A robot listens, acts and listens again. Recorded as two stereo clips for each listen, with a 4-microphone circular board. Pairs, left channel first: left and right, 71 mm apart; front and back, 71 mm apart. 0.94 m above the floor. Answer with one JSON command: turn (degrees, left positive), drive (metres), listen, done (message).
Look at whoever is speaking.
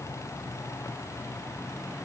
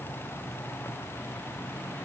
{"listen": true}
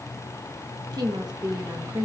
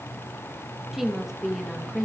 {"turn": -95}
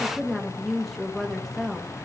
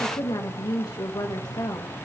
{"done": "Found it: a woman speaking, straight ahead, 1 to 2 m away."}